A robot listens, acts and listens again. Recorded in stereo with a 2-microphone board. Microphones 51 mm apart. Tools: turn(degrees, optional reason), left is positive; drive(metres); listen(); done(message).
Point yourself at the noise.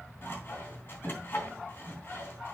turn(degrees=45, reason="The sawing: about 45° left or 135° left.")
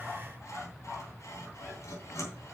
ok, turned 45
turn(degrees=90, reason="So it is at 90° left.")
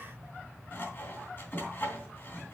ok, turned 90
turn(degrees=40, reason="The sawing is now 40° left.")
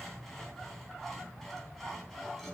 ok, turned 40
done("Found it: sawing, straight ahead, 2 to 4 m away.")